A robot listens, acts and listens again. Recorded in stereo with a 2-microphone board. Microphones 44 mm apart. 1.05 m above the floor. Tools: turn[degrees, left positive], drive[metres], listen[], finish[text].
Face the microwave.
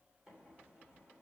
Thought: The microwave: about 15° right or 165° right.
Action: turn[-15]
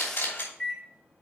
Action: finish[Facing the microwave.]